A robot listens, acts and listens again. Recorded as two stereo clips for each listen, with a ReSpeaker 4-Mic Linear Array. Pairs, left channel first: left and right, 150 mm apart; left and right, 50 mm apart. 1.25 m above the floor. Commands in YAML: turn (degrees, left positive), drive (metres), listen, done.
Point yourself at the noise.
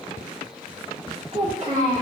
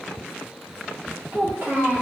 turn: -45
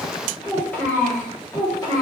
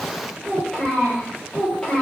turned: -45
turn: 25
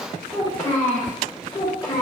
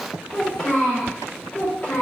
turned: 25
turn: 30
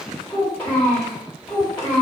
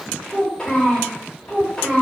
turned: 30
turn: 10
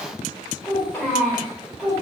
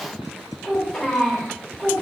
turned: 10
done: "Facing the child speaking."